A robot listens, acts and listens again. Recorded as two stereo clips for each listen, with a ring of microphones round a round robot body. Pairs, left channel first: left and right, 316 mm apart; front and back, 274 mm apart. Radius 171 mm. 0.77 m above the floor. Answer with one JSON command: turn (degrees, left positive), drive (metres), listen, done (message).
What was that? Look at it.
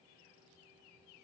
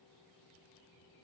{"listen": true}
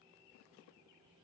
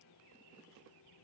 {"listen": true}
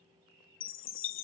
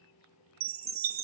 {"turn": 140}
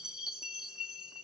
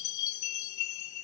{"done": "Found it: a chime, straight ahead."}